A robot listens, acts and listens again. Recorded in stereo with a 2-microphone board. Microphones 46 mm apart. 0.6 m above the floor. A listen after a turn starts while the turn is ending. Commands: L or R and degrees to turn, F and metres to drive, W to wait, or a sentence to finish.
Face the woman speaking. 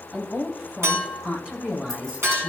R25
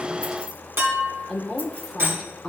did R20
Facing the woman speaking.